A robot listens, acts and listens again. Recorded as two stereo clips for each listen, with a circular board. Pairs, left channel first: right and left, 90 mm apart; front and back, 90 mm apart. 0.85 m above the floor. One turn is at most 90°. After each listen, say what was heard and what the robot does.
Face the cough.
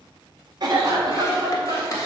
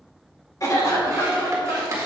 The cough: 50° left. Turn 50° left.
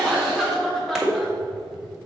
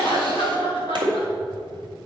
Facing the cough, 2 to 4 m away.